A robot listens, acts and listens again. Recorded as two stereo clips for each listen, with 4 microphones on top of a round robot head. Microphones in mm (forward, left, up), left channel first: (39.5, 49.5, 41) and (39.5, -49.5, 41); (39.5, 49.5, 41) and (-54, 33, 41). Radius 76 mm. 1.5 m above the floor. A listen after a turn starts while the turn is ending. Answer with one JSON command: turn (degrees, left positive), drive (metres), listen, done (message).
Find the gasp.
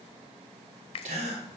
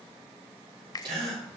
{"turn": -120}
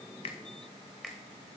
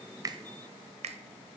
{"done": "Facing where the gasp came from. I can't hear it now."}